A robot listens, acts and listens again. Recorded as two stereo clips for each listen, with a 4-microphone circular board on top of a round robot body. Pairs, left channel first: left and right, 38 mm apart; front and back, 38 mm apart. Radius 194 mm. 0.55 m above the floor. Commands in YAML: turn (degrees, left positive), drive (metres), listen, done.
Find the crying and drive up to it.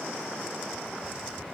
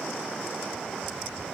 listen: true
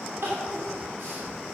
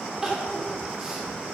turn: -100
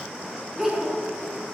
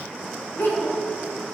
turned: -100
turn: -10
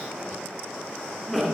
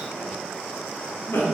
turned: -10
drive: 1.0
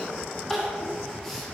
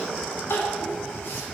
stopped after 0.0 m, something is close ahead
done: "Something is in my way. I am facing the crying but have not reached it."